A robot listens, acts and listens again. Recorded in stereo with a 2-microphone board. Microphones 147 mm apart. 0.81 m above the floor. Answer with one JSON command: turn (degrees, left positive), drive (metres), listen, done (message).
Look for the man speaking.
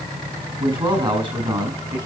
{"turn": -30}
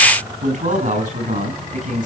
{"turn": -120}
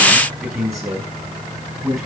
{"done": "Found it: a man speaking, straight ahead, over 4 m away."}